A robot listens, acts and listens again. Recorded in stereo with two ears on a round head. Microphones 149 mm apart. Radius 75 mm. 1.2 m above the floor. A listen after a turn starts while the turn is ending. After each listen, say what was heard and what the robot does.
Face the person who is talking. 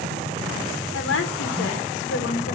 Turn 90° left.
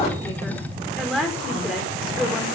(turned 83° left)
Found it: a woman speaking, straight ahead, 1 to 2 m away.